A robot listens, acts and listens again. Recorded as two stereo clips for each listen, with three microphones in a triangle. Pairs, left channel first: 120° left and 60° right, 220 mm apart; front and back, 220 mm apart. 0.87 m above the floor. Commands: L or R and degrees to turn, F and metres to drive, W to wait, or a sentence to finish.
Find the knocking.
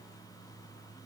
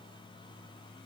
W
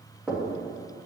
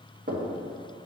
R145
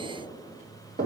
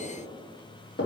R25
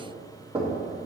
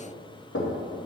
Facing the knocking, under 1 m away.